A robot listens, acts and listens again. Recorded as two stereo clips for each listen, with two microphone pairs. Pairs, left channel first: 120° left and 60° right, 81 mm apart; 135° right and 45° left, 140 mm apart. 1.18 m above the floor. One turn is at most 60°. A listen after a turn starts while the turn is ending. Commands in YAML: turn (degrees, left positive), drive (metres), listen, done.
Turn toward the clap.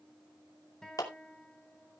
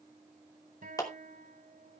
turn: 60
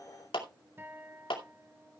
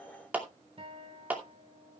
turn: 60
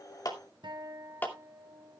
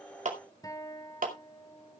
turn: 55
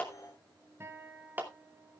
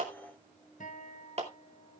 turn: 10
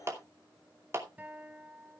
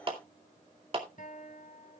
done: "Facing the clap."